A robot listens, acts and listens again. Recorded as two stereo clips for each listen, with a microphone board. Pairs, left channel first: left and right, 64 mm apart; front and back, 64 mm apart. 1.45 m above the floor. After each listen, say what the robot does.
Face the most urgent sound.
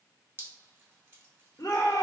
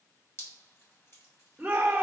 Turn 110° left.
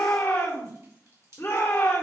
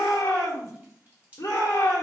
Turn 30° left.
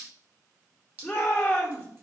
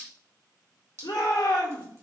Facing the shout, 1 to 2 m away.